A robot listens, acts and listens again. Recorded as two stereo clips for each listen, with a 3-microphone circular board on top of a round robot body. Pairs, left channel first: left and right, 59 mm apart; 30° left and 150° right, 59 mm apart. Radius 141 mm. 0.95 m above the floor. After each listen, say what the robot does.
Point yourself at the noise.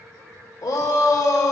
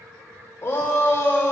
Turn 80° left.
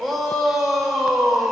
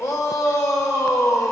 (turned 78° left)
Facing the shout, 1 to 2 m away.